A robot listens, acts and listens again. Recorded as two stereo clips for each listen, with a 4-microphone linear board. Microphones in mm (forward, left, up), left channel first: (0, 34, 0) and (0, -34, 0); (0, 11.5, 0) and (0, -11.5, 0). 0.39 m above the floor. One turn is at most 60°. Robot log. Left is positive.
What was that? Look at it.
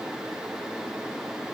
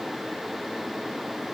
cmd idle
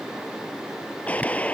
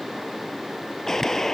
note: The gunshot: about 20° left or 160° left.
cmd yaw +20
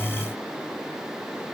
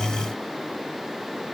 cmd idle
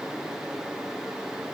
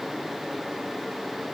end: I heard a gunshot, but can't make it out now. It was about straight ahead or 140° left.